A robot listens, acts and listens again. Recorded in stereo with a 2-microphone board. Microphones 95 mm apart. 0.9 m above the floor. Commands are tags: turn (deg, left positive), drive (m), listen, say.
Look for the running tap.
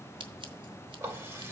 <turn deg="-30"/>
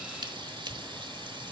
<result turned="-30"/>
<turn deg="-120"/>
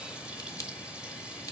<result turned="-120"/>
<turn deg="-10"/>
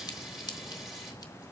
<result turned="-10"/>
<say>Found it: a running tap, straight ahead, 2 to 4 m away.</say>